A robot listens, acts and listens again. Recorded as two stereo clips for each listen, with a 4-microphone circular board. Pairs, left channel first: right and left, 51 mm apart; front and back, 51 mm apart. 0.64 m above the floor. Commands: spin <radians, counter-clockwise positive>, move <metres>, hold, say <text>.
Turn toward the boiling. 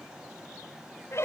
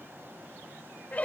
hold
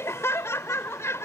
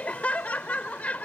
hold
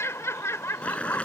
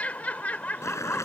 spin -0.35
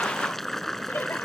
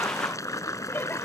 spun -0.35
say Facing the boiling.